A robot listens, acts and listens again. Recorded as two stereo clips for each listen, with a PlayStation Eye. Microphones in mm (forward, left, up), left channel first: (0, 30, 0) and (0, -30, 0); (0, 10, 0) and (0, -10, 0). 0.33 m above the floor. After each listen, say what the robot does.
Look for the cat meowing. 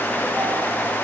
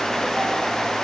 Keep listening.
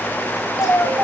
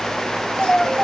Turn 70° left.
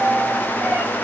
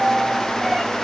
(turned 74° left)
Keep listening.
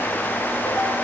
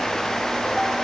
Keep listening.
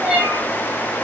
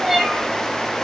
Found it: a cat meowing, straight ahead, over 4 m away.